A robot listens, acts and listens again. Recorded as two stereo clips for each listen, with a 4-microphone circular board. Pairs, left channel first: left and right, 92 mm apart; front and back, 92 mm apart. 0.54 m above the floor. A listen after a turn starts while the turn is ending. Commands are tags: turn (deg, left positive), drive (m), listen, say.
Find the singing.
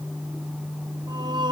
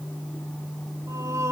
<turn deg="-120"/>
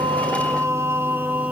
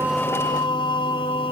<turn deg="-15"/>
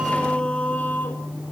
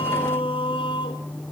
<turn deg="20"/>
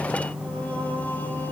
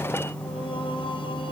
<listen/>
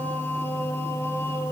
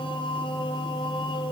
<listen/>
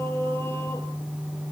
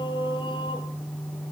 <turn deg="30"/>
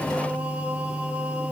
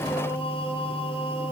<listen/>
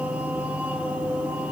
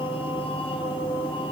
<turn deg="-15"/>
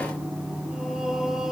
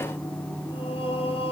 <say>Found it: singing, straight ahead.</say>